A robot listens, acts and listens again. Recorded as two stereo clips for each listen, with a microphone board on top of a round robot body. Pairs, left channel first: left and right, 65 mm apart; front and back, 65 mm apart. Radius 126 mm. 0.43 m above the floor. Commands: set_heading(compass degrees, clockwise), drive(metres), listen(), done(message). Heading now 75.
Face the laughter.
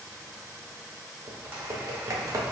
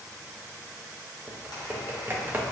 listen()
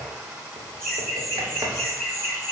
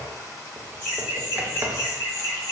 set_heading(65)
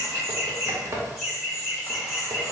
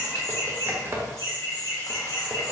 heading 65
done("Facing the laughter.")